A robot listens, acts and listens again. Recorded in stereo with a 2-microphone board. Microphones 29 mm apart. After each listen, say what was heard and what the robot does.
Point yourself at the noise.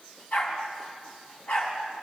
The dog barking: about 70° left or 110° left. Turn 70° left.
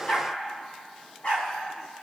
So it is at 35° left. Turn 35° left.
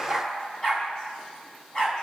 The dog barking is now 20° left. Turn 20° left.
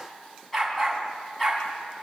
Found it: a dog barking, straight ahead.